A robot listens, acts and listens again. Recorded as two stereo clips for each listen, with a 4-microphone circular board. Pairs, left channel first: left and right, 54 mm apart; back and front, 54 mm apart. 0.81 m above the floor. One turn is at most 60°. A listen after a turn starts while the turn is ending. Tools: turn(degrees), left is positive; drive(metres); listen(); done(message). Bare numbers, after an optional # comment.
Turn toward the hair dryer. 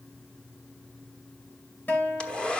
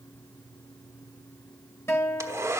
# The hair dryer: 20° left.
turn(20)
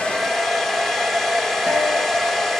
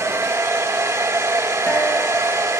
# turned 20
done("Facing the hair dryer.")